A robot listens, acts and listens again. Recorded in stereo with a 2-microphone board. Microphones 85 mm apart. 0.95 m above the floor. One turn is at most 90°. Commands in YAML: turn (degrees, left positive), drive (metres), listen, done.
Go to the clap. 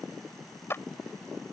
turn: 30
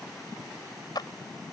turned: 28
turn: 90
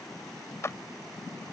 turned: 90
turn: 35
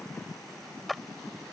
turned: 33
drive: 1.0
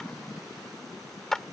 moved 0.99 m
drive: 1.0
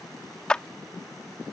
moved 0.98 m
turn: 10
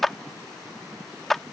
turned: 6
drive: 1.0
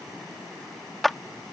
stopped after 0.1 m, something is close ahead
done: "Arrived at the clap, straight ahead."